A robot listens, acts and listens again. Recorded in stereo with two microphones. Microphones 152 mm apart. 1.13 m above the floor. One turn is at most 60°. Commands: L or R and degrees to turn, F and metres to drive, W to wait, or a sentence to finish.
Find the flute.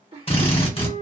R60
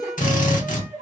R20
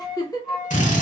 Facing the flute.